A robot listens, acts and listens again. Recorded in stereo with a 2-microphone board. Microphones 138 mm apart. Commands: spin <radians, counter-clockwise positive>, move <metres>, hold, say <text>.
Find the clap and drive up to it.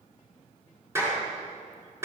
spin -0.35
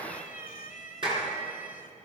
spin -2.44
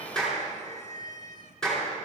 move 1.0
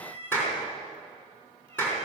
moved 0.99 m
spin 0.26
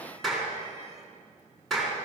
move 1.0
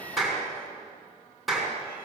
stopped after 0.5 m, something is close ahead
say Something is in my way. I am facing the clap but have not reached it.